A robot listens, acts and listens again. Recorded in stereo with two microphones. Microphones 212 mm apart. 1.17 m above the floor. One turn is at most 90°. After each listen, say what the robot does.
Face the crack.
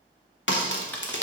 Turn 60° left.
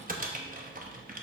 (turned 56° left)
Keep listening.
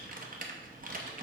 I heard a crack, but can't make it out now. It was about 5° left or 60° left.